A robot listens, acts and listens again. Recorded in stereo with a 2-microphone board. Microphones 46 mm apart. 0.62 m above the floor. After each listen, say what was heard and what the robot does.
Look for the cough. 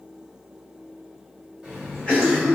The cough: about 25° left or 155° left. Turn 25° left.
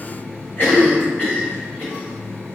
So it is at 125° left. Turn 125° left.
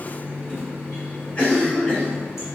The cough is now 45° left. Turn 45° left.
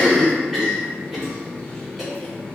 Facing the cough.